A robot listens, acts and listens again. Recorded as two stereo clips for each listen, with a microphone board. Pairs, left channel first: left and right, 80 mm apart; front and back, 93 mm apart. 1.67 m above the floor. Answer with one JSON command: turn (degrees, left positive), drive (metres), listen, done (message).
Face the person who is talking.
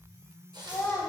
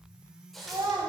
{"turn": 140}
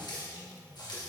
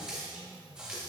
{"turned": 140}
{"listen": true}
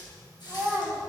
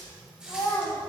{"turn": -30}
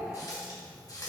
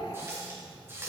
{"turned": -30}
{"listen": true}
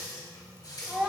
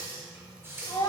{"turn": -10}
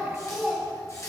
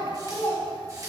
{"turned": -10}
{"done": "Found it: a child speaking, straight ahead, 1 to 2 m away."}